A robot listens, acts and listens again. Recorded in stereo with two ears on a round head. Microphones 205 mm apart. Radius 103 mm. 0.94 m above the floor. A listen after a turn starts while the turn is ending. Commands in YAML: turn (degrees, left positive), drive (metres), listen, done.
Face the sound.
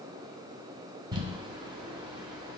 turn: -20
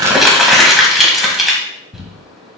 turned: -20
done: "Facing the crumpling, 1 to 2 m away."